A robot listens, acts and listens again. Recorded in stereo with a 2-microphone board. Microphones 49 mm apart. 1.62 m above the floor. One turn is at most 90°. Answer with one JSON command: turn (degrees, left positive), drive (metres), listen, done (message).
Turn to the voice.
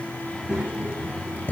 {"turn": -30}
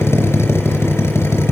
{"listen": true}
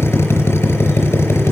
{"listen": true}
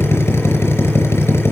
{"done": "I heard a child speaking, but can't make it out now. It was about 15° left or 135° right."}